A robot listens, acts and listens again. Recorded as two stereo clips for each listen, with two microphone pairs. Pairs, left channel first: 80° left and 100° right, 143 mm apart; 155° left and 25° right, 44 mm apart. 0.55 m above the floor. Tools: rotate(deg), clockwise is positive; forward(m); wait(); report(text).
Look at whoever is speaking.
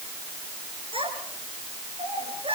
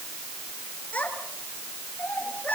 rotate(150)
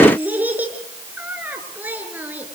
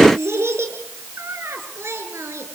rotate(25)
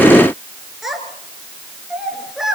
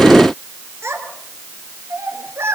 rotate(15)
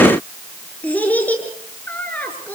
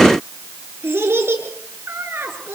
report("Found it: a child speaking, straight ahead.")